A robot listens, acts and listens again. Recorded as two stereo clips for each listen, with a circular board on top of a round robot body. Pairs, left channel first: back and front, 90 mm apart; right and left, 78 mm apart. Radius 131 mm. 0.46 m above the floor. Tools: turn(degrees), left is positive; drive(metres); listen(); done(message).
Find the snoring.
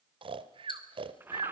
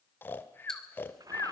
turn(degrees=-25)
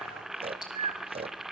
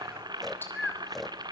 done("Facing the snoring.")